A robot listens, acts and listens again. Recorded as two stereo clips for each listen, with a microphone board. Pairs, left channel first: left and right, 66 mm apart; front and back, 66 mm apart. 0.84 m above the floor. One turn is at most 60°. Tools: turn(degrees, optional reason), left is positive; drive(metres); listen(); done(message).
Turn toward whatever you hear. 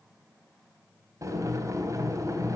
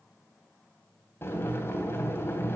turn(degrees=-50, reason="The boiling: 50° right.")
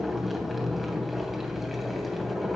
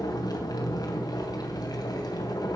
done("Found it: boiling, straight ahead, 2 to 4 m away.")